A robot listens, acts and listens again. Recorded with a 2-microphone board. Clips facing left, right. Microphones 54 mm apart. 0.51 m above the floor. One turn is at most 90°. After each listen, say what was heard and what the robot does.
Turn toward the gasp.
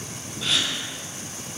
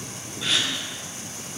Turn 30° left.
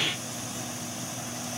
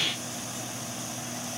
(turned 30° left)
Keep listening.
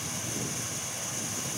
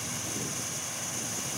I heard a gasp, but can't make it out now. It was about 30° right or 150° left.